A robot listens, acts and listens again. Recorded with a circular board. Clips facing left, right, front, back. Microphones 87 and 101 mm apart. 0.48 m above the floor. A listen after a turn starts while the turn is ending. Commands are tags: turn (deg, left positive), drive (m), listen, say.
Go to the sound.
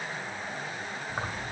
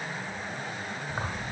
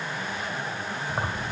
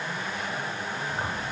<drive m="1.0"/>
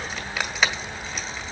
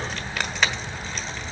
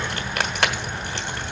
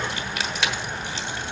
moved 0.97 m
<drive m="1.0"/>
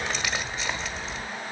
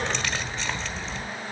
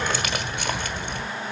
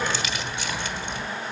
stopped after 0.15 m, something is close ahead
<say>Arrived at the keys jangling, straight ahead.</say>